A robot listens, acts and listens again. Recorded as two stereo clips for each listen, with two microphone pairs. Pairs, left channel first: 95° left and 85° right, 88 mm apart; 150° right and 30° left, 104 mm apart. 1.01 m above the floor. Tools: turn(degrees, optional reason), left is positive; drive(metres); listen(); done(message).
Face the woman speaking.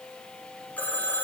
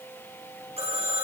listen()
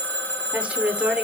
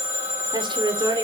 turn(degrees=-10, reason="The woman speaking: 10° right.")
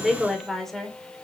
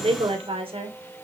turn(degrees=10, reason="The woman speaking is now 10° left.")
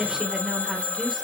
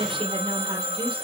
done("Found it: a woman speaking, straight ahead, 2 to 4 m away.")